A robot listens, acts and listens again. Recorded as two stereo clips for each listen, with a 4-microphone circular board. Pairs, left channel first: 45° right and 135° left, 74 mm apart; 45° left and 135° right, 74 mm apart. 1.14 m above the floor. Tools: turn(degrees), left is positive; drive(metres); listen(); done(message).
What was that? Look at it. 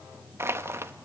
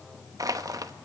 turn(degrees=-170)
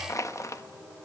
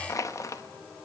done("Found it: crushing, straight ahead, 1 to 2 m away.")